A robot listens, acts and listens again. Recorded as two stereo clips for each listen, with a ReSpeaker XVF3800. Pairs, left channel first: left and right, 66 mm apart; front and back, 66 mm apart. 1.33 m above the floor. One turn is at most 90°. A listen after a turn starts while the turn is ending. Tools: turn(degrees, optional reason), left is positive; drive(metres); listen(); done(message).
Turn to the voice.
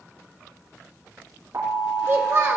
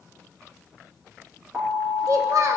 turn(degrees=-90, reason="The child speaking: 140° right.")
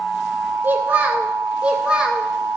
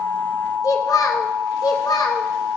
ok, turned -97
turn(degrees=-15, reason="The child speaking is now 15° right.")
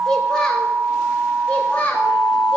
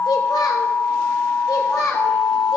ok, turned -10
turn(degrees=25, reason="The child speaking is now 25° left.")
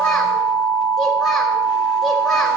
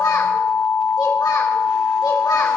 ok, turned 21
listen()
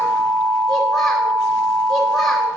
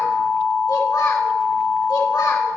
listen()
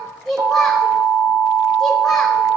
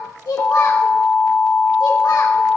done("Found it: a child speaking, straight ahead.")